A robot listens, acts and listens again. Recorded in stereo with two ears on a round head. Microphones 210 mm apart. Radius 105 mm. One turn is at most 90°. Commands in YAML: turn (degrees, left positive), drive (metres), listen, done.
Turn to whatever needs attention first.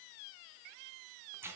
listen: true
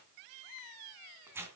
listen: true
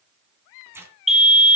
turn: 30
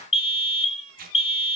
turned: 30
turn: 90
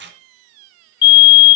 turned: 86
turn: 65
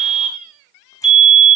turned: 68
done: "Facing the fire alarm, 2 to 4 m away."